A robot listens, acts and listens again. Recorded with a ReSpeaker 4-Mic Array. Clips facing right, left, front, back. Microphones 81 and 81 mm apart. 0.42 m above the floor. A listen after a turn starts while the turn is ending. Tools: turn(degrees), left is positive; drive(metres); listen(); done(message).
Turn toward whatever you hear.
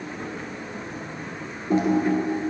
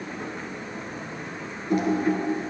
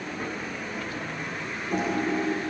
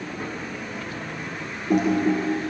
turn(degrees=-155)
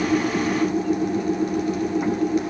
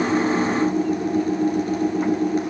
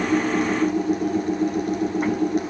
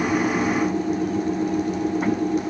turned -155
turn(degrees=35)
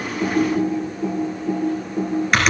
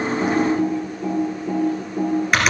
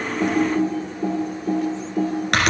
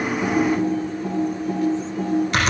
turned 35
done("Found it: typing on a keyboard, straight ahead, 2 to 4 m away.")